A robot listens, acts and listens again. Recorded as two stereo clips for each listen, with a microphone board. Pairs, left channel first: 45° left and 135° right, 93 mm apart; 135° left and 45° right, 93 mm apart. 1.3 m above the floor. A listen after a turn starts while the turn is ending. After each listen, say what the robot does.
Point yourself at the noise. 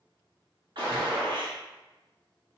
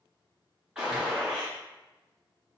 Turn 125° right.
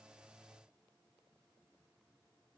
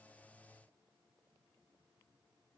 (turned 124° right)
I heard a gunshot from this way, but can't make it out now.